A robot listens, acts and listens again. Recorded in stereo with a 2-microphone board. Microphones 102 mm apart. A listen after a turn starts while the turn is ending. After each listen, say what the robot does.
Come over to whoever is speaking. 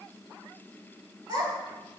Turn 50° right.
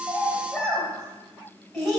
Drive 1.0 m forward.
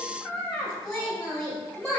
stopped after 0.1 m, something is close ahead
Blocked. The child speaking is further on, straight ahead.